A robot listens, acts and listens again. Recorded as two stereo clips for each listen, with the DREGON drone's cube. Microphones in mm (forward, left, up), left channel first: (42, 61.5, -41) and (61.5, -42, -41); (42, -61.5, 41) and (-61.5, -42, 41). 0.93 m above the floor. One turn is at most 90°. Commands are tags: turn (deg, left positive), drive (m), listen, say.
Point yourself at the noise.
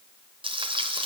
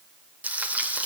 <turn deg="-90"/>
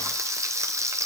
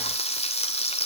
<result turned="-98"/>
<turn deg="-15"/>
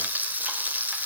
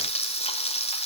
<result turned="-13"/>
<say>Found it: frying, straight ahead, 2 to 4 m away.</say>